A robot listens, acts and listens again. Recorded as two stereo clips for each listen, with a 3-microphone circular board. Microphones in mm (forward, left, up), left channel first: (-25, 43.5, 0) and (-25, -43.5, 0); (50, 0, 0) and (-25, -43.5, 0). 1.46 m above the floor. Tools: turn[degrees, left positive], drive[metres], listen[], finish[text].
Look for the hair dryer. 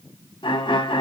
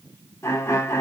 Action: listen[]
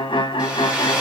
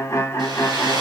Thought: The hair dryer: 165° right.
Action: turn[-165]
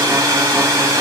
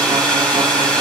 Thought: The hair dryer is now 45° right.
Action: turn[-45]
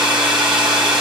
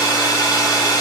Thought: The hair dryer is now 10° right.
Action: turn[-10]
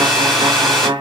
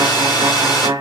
Action: finish[Found it: a hair dryer, straight ahead, 1 to 2 m away.]